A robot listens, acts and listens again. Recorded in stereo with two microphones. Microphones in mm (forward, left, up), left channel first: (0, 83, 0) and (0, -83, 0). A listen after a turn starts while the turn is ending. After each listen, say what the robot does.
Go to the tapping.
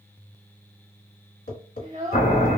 Turn 70° left.
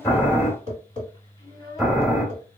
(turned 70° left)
Turn 35° left.
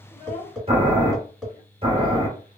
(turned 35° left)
Drive 1.0 m forward.
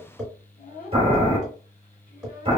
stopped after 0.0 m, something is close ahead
Something is in my way. I am facing the tapping but have not reached it.